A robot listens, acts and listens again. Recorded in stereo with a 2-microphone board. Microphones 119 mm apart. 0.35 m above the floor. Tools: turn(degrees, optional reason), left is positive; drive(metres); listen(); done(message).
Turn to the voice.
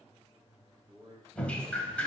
turn(degrees=-35, reason="The man speaking: about 35° right or 145° right.")
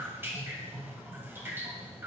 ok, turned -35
listen()
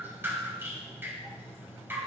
listen()
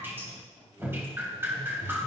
done("I heard a man speaking, but can't make it out now. It was about straight ahead or 110° right.")